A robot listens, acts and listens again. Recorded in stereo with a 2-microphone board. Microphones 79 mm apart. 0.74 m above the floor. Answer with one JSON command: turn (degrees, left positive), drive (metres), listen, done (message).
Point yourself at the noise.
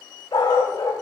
{"turn": 65}
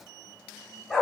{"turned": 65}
{"done": "Facing the dog barking, 2 to 4 m away."}